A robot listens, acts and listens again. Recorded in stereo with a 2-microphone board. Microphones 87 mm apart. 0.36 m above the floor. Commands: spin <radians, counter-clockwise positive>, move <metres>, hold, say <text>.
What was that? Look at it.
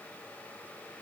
hold
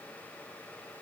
hold
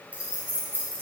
spin -0.44
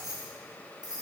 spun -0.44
spin -2.09
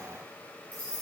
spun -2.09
spin 0.44
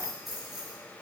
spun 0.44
say Facing the keys jangling.